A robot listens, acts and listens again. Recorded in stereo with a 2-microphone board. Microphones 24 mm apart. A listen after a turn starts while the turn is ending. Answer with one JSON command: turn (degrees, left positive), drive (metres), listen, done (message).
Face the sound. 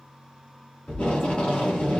{"turn": 55}
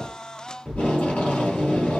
{"turn": 65}
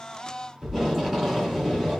{"done": "Facing the tape being pulled, 2 to 4 m away."}